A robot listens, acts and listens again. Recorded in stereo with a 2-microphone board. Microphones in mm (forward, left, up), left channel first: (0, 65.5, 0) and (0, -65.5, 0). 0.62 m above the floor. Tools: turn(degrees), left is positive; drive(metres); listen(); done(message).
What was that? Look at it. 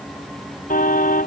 turn(degrees=90)
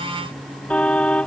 turn(degrees=10)
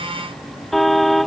done("Found it: a car horn, straight ahead.")